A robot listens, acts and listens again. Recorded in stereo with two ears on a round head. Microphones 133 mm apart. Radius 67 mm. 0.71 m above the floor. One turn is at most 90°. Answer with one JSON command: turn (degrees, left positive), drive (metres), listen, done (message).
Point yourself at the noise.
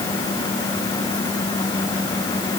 {"listen": true}
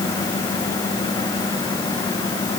{"listen": true}
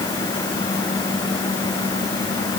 {"done": "I can't make out anything to turn to."}